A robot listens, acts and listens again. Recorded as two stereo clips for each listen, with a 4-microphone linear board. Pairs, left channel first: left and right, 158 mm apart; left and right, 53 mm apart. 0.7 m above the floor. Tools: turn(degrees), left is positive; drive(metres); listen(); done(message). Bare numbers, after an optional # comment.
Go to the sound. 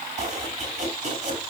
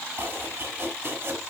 # The chopping: about 50° right or 130° right.
turn(-50)
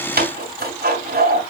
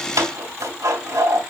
# So it is at 80° right.
turn(-80)
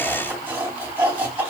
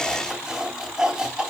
# The chopping is now 10° right.
turn(-10)
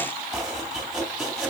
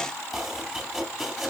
drive(1.0)
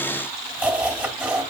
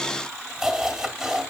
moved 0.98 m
# The chopping is now 10° right.
turn(-10)
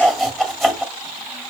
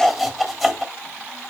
drive(1.0)
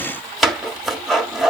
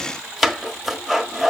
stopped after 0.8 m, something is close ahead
done("I am next to the chopping.")